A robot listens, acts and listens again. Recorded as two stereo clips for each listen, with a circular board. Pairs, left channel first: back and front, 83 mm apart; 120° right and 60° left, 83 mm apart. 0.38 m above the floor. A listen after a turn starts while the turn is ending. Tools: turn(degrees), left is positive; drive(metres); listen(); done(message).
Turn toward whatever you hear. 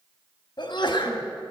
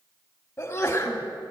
turn(degrees=180)
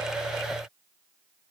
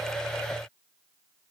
done("I heard a sneeze from this way, but can't make it out now.")